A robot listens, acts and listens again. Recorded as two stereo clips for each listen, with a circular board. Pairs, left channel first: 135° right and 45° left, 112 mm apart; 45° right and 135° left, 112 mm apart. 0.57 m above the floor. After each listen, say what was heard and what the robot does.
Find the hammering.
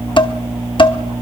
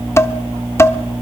Keep listening.
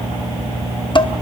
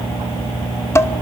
Keep listening.
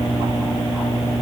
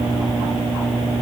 I can't make out hammering to turn to.